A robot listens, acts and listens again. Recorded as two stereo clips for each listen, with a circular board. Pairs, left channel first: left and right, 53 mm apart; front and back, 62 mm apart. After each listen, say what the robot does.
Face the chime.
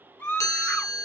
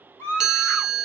Turn 100° left.
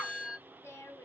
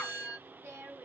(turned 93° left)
Found it: a chime, straight ahead.